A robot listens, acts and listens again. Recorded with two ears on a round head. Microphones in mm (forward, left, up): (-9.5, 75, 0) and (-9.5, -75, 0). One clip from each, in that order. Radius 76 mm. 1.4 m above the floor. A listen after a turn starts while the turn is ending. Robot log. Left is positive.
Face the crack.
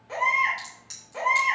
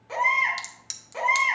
note: The crack: about 65° right or 115° right.
cmd yaw -65
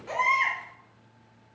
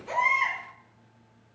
cmd idle
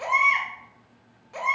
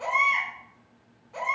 end: I heard a crack, but can't make it out now. It was about straight ahead or 50° right.